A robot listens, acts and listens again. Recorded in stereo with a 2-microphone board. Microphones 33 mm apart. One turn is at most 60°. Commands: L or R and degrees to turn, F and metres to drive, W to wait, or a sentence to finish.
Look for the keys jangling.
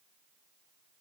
W
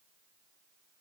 W
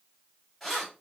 L30
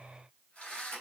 L60
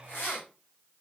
L60
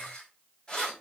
L30
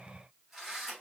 Facing the keys jangling, 1 to 2 m away.